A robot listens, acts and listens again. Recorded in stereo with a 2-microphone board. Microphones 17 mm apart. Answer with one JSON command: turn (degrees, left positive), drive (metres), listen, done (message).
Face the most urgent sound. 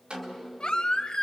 {"turn": 60}
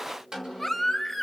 {"done": "Facing the baby crying, 1 to 2 m away."}